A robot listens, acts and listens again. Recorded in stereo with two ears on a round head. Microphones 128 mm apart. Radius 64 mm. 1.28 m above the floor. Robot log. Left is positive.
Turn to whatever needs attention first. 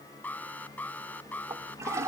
cmd yaw +30
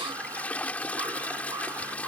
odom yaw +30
cmd idle
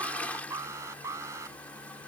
note: So it is at 20° right.
cmd yaw -20
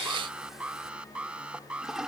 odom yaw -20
end: Facing the alarm.